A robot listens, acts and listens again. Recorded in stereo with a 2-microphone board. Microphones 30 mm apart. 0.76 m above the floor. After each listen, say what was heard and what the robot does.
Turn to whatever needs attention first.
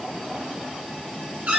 Keep listening.
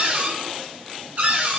Keep listening.
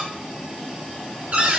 I can't make out anything urgent to turn to.